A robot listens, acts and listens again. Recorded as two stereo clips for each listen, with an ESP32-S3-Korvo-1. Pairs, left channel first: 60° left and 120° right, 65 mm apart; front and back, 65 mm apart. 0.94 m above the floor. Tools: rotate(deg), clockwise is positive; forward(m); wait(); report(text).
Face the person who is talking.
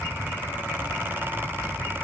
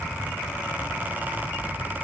wait()
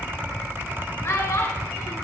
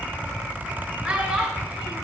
rotate(-110)
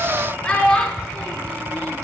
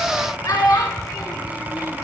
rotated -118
rotate(10)
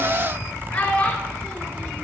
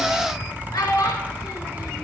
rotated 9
report("Facing the child speaking, 1 to 2 m away.")